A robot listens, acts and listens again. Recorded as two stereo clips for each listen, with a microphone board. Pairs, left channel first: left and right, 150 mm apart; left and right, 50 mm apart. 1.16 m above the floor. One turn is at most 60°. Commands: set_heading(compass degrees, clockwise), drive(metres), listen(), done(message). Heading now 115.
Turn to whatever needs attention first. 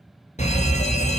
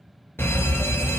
set_heading(65)
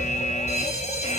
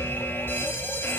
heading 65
set_heading(5)
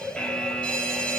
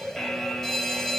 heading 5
done("Facing the fire alarm, 1 to 2 m away.")